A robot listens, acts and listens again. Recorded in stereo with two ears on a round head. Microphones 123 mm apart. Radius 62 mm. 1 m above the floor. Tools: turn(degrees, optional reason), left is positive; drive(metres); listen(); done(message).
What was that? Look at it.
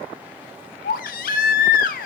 turn(degrees=70, reason="The baby crying: about 70° left or 110° left.")
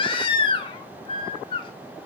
turn(degrees=40, reason="So it is at 40° left.")
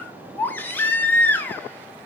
turn(degrees=15, reason="The baby crying is now 15° left.")
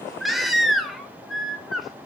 done("Found it: a baby crying, straight ahead.")